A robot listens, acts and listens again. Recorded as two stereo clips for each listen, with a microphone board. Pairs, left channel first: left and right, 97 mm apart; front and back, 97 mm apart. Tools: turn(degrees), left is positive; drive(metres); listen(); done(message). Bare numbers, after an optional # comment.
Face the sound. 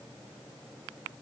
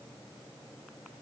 listen()
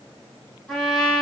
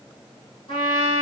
done("Facing the trumpet.")